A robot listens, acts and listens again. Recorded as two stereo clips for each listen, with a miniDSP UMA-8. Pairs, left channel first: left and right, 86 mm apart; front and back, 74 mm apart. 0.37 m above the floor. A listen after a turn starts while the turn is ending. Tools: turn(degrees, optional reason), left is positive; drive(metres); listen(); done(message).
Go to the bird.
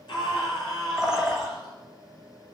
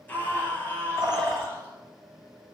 turn(degrees=-170, reason="The bird: 170° right.")
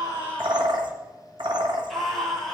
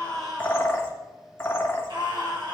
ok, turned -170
turn(degrees=-60, reason="The bird is now 60° right.")
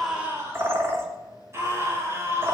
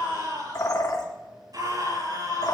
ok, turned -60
turn(degrees=-25, reason="The bird is now 25° right.")
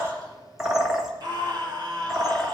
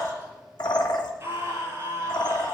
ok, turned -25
drive(metres=1.0)
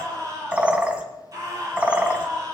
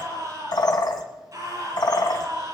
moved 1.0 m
turn(degrees=-10, reason="The bird is now 10° right.")
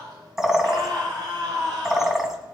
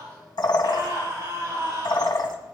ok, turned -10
drive(metres=1.0)
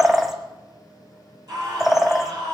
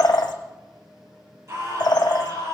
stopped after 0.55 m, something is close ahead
done("I am next to the bird.")